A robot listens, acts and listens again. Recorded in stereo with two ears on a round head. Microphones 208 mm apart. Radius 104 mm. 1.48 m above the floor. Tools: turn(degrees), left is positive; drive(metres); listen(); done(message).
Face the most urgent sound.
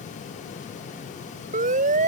turn(degrees=-35)
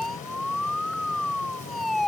done("Facing the siren.")